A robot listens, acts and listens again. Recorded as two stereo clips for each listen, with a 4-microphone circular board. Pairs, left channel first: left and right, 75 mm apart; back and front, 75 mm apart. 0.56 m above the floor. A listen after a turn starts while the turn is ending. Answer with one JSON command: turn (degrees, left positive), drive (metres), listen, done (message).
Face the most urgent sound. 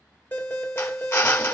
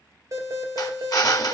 {"turn": 30}
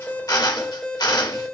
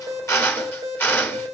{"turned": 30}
{"done": "Facing the alarm, 2 to 4 m away."}